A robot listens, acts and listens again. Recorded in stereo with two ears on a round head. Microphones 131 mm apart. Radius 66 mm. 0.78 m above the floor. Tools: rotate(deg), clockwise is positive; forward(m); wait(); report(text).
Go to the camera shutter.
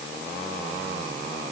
wait()
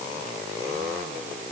wait()
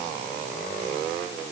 report("I can't make out a camera shutter to turn to.")